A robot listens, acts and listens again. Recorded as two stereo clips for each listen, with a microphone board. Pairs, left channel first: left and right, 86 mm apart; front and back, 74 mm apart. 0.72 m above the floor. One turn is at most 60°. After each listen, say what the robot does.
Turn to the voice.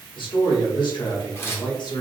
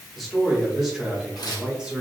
Turn 60° left.
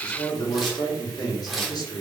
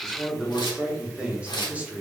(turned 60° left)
Turn 60° left.
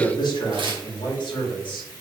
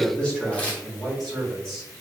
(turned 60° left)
Turn 60° left.
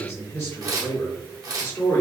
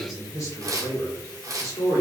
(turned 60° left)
Turn 25° left.
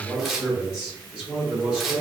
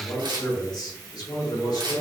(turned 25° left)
Turn 15° right.
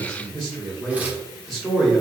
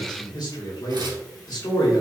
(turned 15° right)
Facing the man speaking.